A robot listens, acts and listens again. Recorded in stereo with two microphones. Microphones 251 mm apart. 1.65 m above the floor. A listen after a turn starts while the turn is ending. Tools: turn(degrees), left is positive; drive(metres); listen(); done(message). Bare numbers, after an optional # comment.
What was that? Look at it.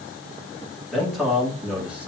turn(-30)
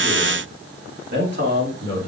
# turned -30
# So it is at 135° right.
turn(-135)
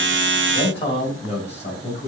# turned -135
# The man speaking is now 25° left.
turn(25)
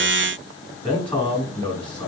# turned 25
done("Facing the man speaking.")